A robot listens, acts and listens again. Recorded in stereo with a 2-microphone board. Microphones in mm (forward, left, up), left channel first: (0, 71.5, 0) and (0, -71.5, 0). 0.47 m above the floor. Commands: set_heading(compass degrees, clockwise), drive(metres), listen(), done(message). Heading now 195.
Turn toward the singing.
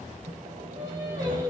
set_heading(215)
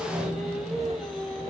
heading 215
done("Found it: singing, straight ahead, 2 to 4 m away.")